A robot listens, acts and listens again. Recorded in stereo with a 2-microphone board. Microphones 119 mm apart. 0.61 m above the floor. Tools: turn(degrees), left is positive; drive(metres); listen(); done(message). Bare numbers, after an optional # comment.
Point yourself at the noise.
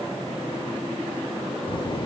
# The child speaking: about 45° left or 135° left.
turn(45)
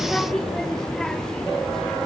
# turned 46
done("Facing the child speaking.")